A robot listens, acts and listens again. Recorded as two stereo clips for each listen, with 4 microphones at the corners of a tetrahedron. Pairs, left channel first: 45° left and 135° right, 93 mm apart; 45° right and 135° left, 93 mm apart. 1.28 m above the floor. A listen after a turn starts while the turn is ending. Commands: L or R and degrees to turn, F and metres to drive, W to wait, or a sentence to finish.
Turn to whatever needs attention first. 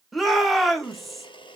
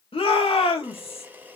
R45
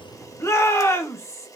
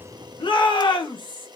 R15
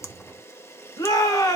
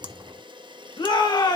Facing the shout.